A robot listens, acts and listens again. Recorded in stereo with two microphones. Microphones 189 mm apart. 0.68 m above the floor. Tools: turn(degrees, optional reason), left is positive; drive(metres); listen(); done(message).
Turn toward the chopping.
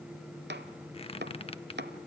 turn(degrees=-65, reason="The chopping: about 65° right or 115° right.")
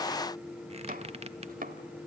turn(degrees=-50, reason="So it is at 50° right.")
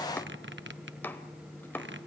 turn(degrees=10, reason="The chopping is now 10° left.")
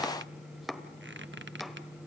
done("Found it: chopping, straight ahead, 1 to 2 m away.")